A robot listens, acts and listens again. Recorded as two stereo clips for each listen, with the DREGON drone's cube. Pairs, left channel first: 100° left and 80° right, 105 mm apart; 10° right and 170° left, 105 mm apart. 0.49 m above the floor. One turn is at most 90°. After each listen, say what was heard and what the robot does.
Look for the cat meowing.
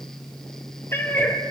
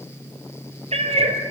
The cat meowing: 170° left. Turn 90° left.
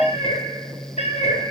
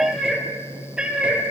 The cat meowing is now 90° left. Turn 90° left.
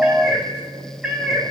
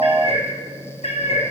Found it: a cat meowing, straight ahead, 2 to 4 m away.